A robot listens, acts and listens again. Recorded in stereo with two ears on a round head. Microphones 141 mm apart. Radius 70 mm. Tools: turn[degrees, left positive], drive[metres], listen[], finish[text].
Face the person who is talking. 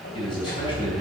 Thought: The man speaking: about 30° left or 150° left.
Action: turn[30]
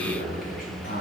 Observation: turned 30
Thought: So it is at 120° left.
Action: turn[120]
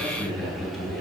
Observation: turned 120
Action: finish[Found it: a man speaking, straight ahead.]